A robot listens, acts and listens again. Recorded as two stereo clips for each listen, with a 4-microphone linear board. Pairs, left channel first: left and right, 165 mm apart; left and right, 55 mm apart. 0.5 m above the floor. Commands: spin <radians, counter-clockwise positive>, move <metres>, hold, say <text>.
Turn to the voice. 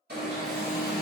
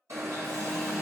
hold
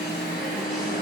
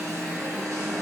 hold
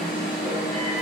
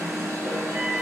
say I can't make out anyone speaking, only an alarm.